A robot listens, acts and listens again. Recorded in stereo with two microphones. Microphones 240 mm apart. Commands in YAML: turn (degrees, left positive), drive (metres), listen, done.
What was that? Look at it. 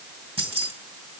turn: -25
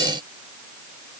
listen: true
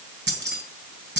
turn: -130
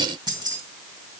turn: -20
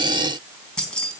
done: "Facing the keys jangling."